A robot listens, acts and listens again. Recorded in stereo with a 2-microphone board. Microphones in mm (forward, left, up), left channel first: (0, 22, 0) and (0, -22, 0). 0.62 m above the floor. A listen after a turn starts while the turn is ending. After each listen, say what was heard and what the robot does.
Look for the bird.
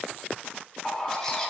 The bird: about 15° left or 165° left. Turn 15° left.
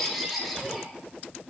Found it: a bird, straight ahead.